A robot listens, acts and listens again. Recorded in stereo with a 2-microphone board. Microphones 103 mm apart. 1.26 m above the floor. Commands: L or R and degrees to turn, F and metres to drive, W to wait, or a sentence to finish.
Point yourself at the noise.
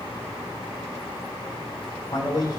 L50
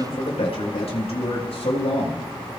L85
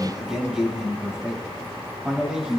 Found it: a man speaking, straight ahead, over 4 m away.